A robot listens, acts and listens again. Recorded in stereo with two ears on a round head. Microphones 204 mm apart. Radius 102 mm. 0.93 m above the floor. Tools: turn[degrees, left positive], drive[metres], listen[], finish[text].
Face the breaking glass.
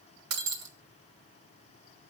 Action: turn[-90]
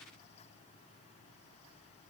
Action: finish[I heard breaking glass from this way, but can't make it out now.]